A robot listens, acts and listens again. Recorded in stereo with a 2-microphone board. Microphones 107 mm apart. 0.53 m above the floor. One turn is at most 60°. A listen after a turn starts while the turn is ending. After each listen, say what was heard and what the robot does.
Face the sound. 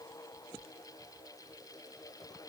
Keep listening.
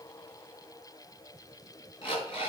The alarm clock: about 55° left or 125° left. Turn 55° left.
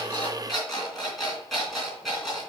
Found it: an alarm clock, straight ahead.